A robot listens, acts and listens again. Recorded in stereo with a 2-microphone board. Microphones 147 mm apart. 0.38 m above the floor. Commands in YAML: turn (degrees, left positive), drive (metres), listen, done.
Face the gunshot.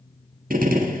turn: -90
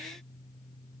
done: "Facing where the gunshot came from. I can't hear it now."